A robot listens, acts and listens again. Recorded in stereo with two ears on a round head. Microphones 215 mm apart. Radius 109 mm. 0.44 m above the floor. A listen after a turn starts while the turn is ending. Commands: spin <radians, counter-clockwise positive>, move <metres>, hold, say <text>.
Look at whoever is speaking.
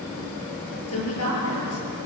spin 1.13
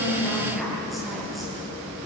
hold
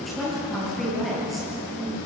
say Facing the woman speaking.